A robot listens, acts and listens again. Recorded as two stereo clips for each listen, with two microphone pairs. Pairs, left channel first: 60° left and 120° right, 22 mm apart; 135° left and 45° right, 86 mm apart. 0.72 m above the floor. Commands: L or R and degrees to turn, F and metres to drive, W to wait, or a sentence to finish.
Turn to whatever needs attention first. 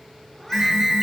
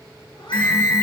R170
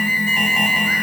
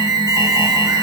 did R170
Found it: an alarm, straight ahead.